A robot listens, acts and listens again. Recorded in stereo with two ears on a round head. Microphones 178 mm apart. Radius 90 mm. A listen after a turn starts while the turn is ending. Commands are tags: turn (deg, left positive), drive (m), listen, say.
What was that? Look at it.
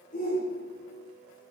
<turn deg="50"/>
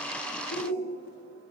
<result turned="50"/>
<turn deg="80"/>
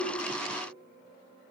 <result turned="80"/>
<listen/>
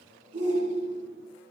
<turn deg="-30"/>
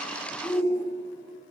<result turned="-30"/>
<turn deg="10"/>
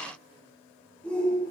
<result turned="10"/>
<say>Found it: a shout, straight ahead.</say>